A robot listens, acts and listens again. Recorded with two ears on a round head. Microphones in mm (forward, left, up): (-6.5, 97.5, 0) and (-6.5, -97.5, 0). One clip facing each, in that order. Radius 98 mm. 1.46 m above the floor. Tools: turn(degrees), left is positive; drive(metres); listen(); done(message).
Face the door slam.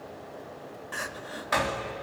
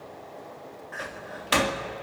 turn(degrees=-45)
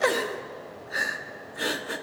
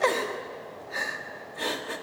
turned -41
listen()
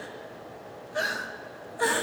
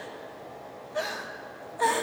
done("I heard a door slam, but can't make it out now. It was about 5° right or 95° right.")